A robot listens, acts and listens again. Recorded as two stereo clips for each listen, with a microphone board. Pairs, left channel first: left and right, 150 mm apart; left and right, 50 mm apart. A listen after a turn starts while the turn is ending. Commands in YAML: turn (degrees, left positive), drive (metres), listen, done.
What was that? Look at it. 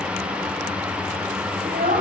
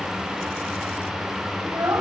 turn: -90
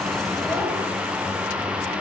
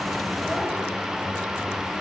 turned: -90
listen: true
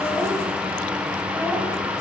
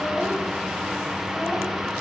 listen: true
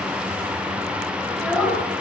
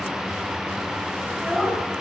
done: "Found it: a child speaking, straight ahead."